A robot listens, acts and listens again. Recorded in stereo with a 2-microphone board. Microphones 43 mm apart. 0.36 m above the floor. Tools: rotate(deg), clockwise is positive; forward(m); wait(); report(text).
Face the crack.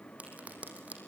rotate(35)
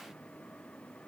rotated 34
wait()
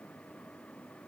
report("I heard a crack, but can't make it out now. It was about straight ahead or 110° right.")